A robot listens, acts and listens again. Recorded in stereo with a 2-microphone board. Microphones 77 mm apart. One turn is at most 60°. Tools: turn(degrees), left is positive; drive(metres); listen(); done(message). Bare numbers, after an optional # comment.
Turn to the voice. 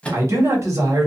# The man speaking: about 40° right or 140° right.
turn(-40)
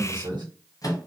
# So it is at 95° right.
turn(-60)
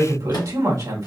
# The man speaking is now 50° right.
turn(-50)
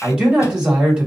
# The man speaking is now 15° right.
turn(-15)
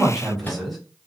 done("Facing the man speaking.")